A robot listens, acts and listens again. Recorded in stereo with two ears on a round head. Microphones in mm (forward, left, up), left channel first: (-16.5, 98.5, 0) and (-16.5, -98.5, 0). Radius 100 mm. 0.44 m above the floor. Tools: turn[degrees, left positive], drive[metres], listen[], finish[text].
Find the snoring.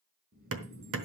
Thought: The snoring: about 45° right or 135° right.
Action: turn[-45]
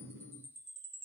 Thought: So it is at 80° right.
Action: turn[-80]
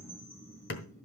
Thought: The snoring is now 15° left.
Action: turn[15]
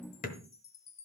Action: listen[]
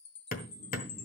Action: listen[]
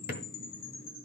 Action: finish[Facing the snoring.]